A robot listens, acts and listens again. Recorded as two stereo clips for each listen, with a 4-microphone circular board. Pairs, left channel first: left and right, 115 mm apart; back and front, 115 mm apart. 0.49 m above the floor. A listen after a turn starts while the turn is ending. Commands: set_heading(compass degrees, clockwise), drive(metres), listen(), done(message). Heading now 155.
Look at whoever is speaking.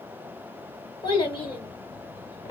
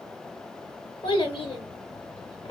set_heading(20)
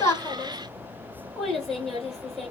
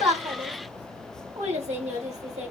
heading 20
done("Facing the child speaking, 1 to 2 m away.")